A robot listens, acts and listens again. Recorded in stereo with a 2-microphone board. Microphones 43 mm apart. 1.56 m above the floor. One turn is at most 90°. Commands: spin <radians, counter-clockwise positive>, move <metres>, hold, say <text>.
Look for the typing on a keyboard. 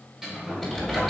spin 0.52
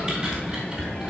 spin -0.52
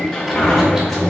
hold
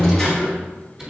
spin -0.35
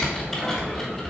say Found it: typing on a keyboard, straight ahead, 2 to 4 m away.